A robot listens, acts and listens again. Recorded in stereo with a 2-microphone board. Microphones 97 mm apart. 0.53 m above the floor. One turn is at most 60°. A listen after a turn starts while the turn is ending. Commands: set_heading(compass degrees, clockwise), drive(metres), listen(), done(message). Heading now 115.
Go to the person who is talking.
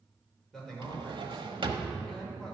set_heading(85)
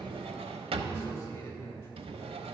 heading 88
set_heading(28)
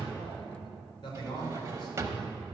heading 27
set_heading(327)
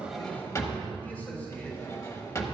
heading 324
set_heading(304)
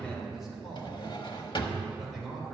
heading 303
drive(1.0)
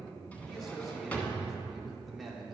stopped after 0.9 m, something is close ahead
done("I am next to the man speaking.")